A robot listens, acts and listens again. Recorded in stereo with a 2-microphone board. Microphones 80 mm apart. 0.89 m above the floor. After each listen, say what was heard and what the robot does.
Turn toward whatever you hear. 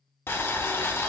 The boiling: about 30° left or 150° left. Turn 30° left.
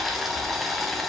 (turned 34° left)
Facing the boiling.